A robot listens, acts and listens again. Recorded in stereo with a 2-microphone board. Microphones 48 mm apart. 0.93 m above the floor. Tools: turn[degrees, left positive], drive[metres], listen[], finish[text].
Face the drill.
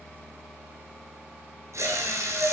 Action: turn[-90]
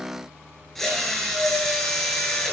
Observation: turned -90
Action: finish[Found it: a drill, straight ahead, over 4 m away.]